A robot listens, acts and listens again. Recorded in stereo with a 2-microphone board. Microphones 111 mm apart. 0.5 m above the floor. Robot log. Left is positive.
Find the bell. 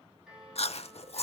cmd yaw -30
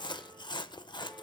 cmd idle
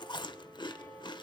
note: So it is at 25° left.
cmd yaw +25
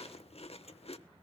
cmd idle
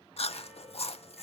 cmd idle
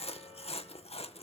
end: I heard a bell from this way, but can't make it out now.